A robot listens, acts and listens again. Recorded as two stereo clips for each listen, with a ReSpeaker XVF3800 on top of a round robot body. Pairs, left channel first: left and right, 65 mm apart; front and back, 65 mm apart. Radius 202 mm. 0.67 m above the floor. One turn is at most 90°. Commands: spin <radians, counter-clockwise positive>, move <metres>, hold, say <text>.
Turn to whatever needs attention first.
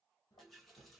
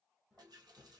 hold
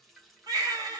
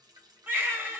spin -1.57
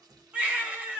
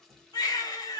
spin -0.35
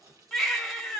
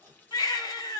say Facing the baby crying.